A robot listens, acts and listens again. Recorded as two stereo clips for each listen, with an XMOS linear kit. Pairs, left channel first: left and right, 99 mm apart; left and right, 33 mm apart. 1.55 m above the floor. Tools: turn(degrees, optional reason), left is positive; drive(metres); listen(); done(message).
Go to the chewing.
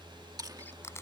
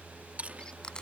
turn(degrees=-40, reason="The chewing: about 40° right or 140° right.")
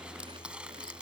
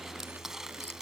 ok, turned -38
listen()
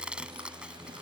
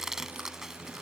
listen()
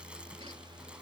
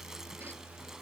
done("I heard chewing, but can't make it out now. It was about 5° right or 100° right. I did not reach it.")